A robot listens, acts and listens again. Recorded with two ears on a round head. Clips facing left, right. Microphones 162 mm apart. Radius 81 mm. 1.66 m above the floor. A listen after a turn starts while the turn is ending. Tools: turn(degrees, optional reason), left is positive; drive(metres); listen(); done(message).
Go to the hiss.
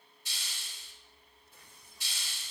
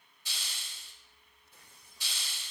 turn(degrees=-65, reason="The hiss: about 65° right or 115° right.")
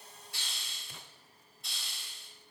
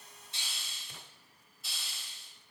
drive(metres=1.0)
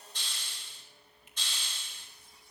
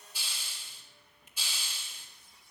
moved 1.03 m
turn(degrees=-10, reason="The hiss is now 10° right.")
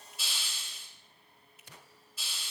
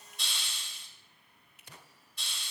drive(metres=1.0)
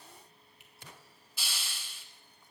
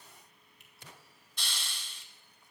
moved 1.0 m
drive(metres=1.0)
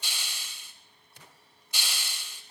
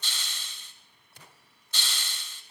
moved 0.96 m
turn(degrees=10, reason="The hiss is now 10° left.")
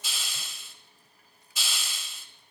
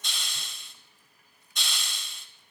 drive(metres=1.0)
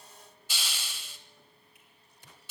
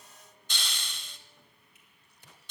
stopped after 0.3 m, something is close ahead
done("Arrived at the hiss, straight ahead.")